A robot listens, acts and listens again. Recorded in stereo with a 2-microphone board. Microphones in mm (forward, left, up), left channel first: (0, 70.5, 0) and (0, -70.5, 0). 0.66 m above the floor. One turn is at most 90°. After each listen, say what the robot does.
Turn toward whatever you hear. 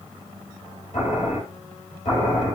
Turn 65° left.
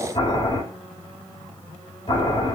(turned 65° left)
Turn 50° left.
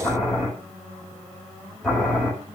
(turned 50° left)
Facing the boiling.